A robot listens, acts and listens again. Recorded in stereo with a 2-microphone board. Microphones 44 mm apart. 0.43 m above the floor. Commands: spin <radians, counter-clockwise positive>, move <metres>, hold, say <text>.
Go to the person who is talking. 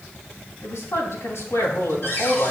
spin 1.31
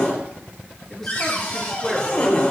spin 0.17
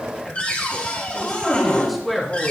move 1.0
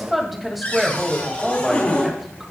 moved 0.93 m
move 1.0
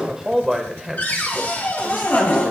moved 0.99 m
spin -0.26
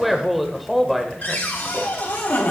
move 1.0
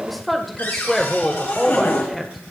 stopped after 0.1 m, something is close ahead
say I am next to the woman speaking.